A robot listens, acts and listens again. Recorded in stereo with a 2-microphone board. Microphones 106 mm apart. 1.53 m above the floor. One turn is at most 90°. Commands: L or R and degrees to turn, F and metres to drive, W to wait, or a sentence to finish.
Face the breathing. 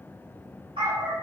W
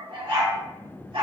W
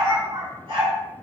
I can't make out breathing to turn to.